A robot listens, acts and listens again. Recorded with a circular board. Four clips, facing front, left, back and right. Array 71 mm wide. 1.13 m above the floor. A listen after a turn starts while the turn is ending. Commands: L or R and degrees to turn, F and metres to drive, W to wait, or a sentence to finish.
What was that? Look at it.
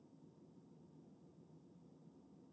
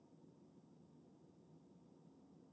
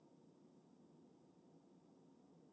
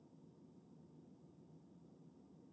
W
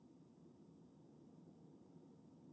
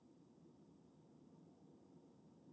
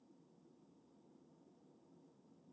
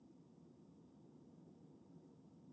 W
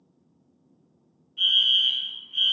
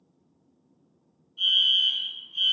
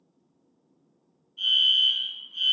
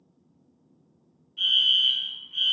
R55
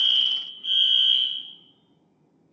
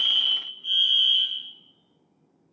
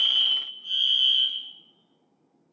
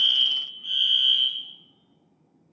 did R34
R25
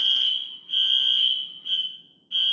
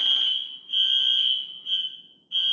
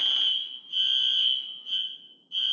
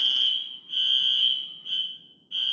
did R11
R10
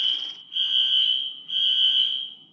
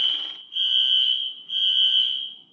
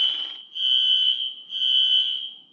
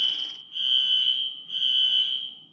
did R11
Found it: a fire alarm, straight ahead, 2 to 4 m away.